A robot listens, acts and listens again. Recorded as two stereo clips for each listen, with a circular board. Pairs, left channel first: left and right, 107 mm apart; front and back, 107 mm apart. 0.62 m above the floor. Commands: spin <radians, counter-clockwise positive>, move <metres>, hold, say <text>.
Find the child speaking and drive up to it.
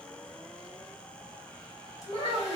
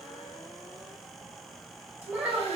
spin 1.92
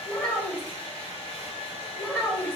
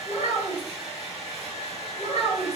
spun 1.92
spin 0.44
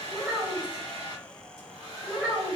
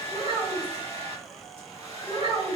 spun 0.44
move 1.0
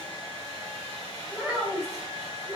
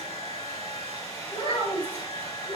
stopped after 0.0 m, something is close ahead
say Blocked. The child speaking is further on, straight ahead.